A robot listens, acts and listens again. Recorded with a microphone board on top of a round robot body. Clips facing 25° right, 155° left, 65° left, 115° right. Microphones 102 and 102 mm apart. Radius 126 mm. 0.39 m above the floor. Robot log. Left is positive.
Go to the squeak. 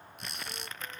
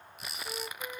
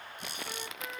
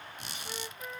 note: The squeak: 115° right.
cmd yaw -115
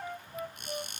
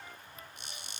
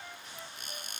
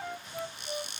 note: The squeak is now 20° left.
cmd yaw +20
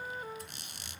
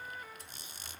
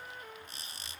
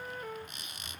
note: The squeak is now 10° left.
cmd yaw +10
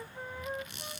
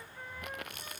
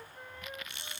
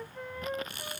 cmd fwd 1.0
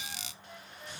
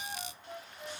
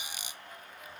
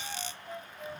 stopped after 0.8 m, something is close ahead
note: The squeak is now 10° right.
cmd yaw -10
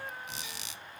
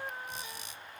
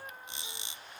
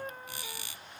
end: Something is in my way. I am facing the squeak but have not reached it.